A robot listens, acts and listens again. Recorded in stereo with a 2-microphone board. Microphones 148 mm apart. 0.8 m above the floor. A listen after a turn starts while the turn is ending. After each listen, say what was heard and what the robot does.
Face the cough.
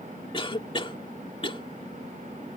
The cough: about 35° left or 145° left. Turn 35° left.
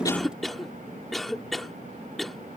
Facing the cough.